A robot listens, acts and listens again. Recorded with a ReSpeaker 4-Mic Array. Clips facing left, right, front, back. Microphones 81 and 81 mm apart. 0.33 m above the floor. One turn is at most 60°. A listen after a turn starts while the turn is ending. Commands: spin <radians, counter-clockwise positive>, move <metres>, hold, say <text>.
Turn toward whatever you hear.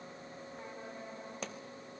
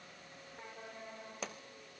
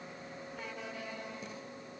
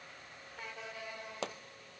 spin 1.05
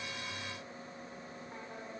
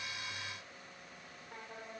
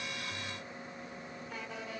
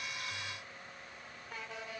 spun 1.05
spin 1.05
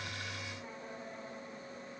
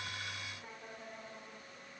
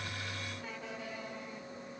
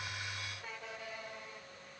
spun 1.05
spin 1.05
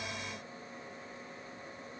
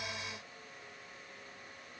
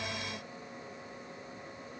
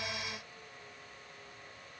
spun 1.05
say I heard a pop from this way, but can't make it out now.